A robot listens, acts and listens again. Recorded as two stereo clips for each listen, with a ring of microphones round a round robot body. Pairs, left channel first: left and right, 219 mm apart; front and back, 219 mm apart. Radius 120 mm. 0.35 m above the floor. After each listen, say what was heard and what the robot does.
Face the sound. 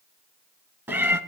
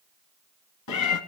The cat meowing: 10° right. Turn 10° right.
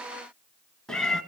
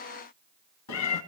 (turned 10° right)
Facing the cat meowing.